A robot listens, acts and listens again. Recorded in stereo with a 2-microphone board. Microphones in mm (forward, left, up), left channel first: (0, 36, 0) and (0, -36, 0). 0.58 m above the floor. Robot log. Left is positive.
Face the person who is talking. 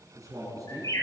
note: The man speaking: about 50° right or 130° right.
cmd yaw -50
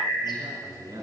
note: So it is at 75° right.
cmd yaw -75
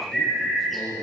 end: Facing the man speaking, over 4 m away.